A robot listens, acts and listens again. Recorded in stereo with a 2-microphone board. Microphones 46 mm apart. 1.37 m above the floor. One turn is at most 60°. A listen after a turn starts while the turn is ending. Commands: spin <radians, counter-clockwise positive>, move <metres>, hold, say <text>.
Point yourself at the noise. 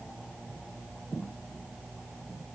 hold
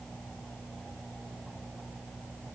hold
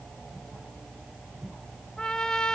spin 0.26
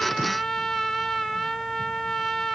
say Found it: a trumpet, straight ahead, 1 to 2 m away.